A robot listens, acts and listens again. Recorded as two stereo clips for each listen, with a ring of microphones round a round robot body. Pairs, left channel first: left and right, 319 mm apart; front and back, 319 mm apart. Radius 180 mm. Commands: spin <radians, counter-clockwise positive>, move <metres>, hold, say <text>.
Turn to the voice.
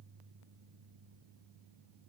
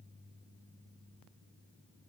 hold
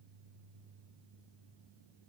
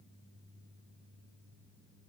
hold
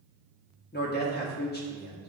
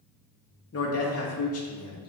spin 0.61
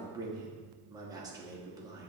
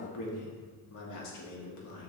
spin -0.26
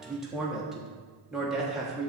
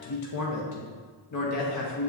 say Found it: a man speaking, straight ahead, 1 to 2 m away.